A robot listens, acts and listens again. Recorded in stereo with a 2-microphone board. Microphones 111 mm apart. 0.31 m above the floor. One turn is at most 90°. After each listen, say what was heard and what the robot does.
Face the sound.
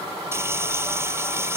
The frying: about 25° right or 155° right. Turn 25° right.
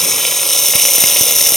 Found it: frying, straight ahead.